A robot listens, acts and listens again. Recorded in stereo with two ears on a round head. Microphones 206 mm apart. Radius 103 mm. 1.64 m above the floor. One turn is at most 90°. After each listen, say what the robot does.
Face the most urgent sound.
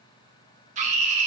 Turn 30° right.
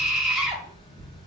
Found it: a scream, straight ahead.